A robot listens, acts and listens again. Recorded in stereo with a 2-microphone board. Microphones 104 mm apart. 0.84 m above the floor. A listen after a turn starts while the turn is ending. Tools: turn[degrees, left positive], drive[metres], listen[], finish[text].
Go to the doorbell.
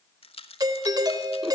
Thought: The doorbell: about 40° right or 140° right.
Action: turn[-40]
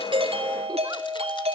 Thought: So it is at 100° right.
Action: turn[-100]
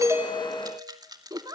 Action: drive[1.0]
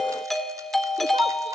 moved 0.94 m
Action: drive[1.0]
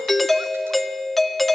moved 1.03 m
Action: drive[1.0]
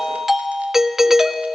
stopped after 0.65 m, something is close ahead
Action: finish[Arrived at the doorbell, straight ahead.]